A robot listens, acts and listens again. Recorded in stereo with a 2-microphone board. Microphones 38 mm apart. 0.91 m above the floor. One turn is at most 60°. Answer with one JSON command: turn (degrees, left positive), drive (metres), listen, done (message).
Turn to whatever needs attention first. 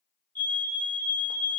{"turn": 60}
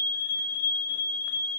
{"turn": 55}
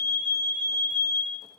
{"turn": 25}
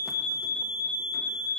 {"turn": 25}
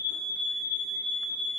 {"done": "Facing the fire alarm."}